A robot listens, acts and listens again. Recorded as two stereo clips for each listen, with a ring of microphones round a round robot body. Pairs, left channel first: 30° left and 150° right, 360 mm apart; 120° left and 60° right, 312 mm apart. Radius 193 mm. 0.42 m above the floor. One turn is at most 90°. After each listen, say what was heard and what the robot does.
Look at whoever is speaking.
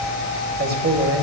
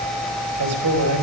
The man speaking: 95° right. Turn 90° right.
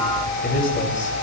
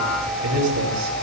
The man speaking is now 35° right. Turn 35° right.
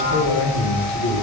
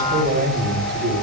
The man speaking is now 10° right. Turn 10° right.
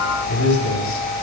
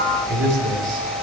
The man speaking is now 10° right. Turn 10° right.
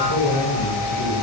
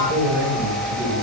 Facing the man speaking.